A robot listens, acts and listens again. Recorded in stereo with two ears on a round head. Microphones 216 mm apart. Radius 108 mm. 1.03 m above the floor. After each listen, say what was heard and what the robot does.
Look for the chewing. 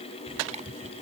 The chewing: about 30° right or 150° right. Turn 30° right.
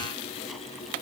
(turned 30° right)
Keep listening.
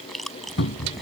Found it: chewing, straight ahead.